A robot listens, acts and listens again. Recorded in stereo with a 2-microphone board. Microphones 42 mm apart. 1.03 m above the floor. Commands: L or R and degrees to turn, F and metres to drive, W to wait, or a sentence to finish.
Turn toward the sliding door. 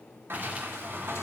R65
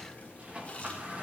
R35
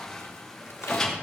L15
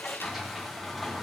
Facing the sliding door.